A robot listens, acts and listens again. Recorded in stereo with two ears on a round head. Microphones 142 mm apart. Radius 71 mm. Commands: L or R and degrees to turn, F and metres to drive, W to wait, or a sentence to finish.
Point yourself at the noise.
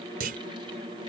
R60
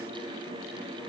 W
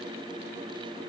I heard a clunk, but can't make it out now. It was about straight ahead or 60° right.